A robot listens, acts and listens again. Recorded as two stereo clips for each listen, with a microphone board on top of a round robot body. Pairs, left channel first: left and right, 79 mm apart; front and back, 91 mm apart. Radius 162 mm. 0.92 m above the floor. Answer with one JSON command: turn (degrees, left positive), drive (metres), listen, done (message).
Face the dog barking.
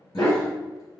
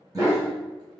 {"turn": 125}
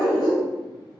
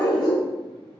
{"turn": 55}
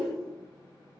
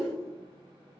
{"listen": true}
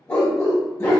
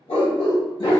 {"turn": 35}
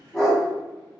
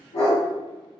{"done": "Found it: a dog barking, straight ahead, 2 to 4 m away."}